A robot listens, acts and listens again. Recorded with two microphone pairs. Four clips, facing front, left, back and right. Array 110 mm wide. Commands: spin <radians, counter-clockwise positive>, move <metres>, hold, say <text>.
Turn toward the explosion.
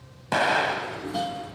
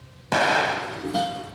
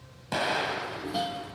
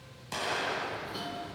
spin 0.96
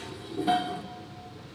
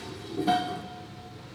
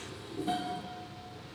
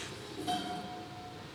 say I heard an explosion from this way, but can't make it out now.